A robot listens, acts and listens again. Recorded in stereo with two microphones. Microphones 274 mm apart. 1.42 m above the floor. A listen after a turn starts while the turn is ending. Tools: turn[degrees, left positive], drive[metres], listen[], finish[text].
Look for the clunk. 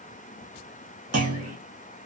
Thought: The clunk: about 65° right or 115° right.
Action: turn[-65]
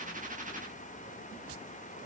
Action: listen[]
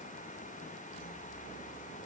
Action: finish[I heard a clunk, but can't make it out now. It was about straight ahead or 50° right.]